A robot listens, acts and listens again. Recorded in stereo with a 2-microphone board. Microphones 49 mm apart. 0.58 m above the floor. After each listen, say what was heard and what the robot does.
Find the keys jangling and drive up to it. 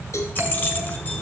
The keys jangling: about 35° left or 145° left. Turn 35° left.
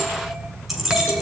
Drive 1.0 m forward.
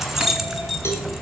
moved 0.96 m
Drive 1.0 m forward.
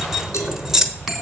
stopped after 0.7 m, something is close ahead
The keys jangling is now 10° right. Turn 10° right.
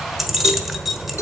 I am next to the keys jangling.